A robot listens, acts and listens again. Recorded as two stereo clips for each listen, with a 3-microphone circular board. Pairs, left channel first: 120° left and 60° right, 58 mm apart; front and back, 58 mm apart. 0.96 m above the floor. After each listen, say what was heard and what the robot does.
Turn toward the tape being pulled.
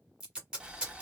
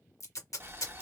The tape being pulled: 10° left. Turn 10° left.
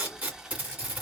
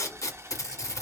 Found it: tape being pulled, straight ahead.